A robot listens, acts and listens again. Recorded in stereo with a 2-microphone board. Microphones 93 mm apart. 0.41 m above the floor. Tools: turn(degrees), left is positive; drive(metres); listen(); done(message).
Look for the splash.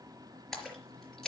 turn(degrees=30)
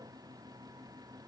listen()
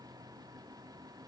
done("I heard a splash, but can't make it out now. It was about 25° right or 145° left.")